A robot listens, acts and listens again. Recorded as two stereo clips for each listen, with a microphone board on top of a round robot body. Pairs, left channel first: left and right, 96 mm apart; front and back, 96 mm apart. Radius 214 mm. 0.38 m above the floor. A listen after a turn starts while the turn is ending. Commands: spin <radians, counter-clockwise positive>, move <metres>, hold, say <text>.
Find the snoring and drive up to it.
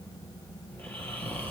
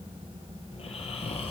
spin 0.35
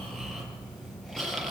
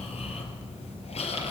move 1.0
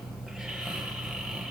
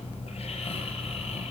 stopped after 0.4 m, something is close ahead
say Something is in my way. I am facing the snoring but have not reached it.